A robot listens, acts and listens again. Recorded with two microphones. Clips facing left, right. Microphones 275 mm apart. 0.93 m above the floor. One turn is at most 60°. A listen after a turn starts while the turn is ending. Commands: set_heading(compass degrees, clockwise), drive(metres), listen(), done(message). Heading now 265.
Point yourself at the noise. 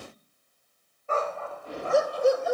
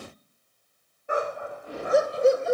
set_heading(290)
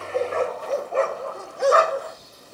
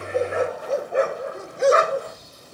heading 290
set_heading(320)
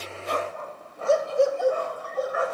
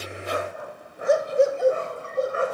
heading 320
set_heading(350)
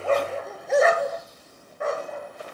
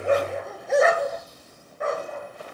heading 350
done("Found it: a dog barking, straight ahead.")